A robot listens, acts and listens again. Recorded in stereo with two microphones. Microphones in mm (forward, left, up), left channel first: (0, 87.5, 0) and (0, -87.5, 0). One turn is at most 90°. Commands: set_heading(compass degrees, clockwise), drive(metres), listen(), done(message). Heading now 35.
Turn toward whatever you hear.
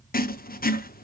set_heading(335)
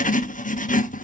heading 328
set_heading(278)
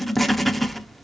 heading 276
done("Facing the writing, under 1 m away.")